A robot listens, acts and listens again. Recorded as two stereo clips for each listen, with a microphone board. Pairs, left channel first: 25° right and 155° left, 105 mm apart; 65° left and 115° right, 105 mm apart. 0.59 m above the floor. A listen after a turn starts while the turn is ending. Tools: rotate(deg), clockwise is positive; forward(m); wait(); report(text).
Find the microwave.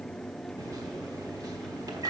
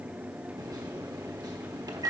rotate(155)
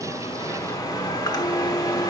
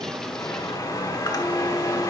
rotate(-20)
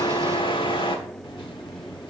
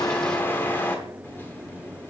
report("Facing the microwave.")